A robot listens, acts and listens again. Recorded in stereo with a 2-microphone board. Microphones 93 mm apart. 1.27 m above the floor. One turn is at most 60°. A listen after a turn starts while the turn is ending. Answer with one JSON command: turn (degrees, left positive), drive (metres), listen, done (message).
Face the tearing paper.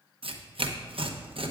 {"turn": -60}
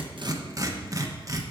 {"turn": -35}
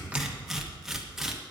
{"done": "Facing the tearing paper, under 1 m away."}